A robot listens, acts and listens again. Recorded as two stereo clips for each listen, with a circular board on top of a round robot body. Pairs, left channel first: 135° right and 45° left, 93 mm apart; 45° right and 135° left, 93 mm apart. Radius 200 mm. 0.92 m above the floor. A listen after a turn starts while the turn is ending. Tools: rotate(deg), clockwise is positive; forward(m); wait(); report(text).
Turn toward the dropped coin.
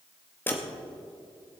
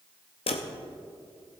rotate(65)
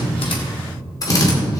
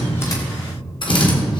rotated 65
report("I heard a dropped coin from this way, but can't make it out now.")